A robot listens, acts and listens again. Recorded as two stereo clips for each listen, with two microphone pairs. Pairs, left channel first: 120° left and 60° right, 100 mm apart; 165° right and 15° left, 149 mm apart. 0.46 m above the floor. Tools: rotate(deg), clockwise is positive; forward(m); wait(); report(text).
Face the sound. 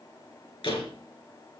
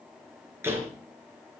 rotate(-90)
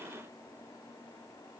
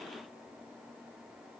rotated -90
report("I heard a door slam from this way, but can't make it out now.")